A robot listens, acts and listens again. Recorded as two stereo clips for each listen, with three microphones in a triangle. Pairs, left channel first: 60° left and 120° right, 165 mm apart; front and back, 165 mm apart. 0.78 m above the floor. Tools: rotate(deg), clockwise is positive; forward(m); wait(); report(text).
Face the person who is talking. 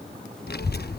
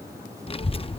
rotate(-55)
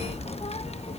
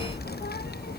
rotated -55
rotate(-10)
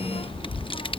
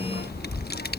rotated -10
report("Found it: a child speaking, straight ahead.")